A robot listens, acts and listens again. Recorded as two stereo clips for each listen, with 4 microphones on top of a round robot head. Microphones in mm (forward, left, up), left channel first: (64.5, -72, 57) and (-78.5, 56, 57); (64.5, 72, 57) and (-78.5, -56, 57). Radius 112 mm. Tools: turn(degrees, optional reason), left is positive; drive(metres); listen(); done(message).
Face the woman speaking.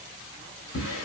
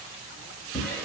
listen()
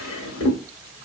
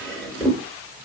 listen()
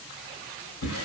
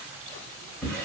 done("I can't make out a woman speaking to turn to.")